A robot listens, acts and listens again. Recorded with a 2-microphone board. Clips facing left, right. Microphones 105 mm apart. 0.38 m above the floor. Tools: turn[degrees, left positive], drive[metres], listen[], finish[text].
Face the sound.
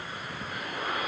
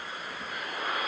Action: listen[]
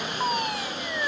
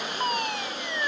Action: turn[30]
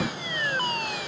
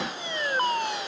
Thought: So it is at 25° right.
Action: turn[-25]
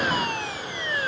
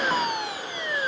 Thought: The fire alarm is now 15° right.
Action: turn[-15]
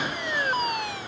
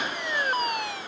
Action: finish[Facing the fire alarm.]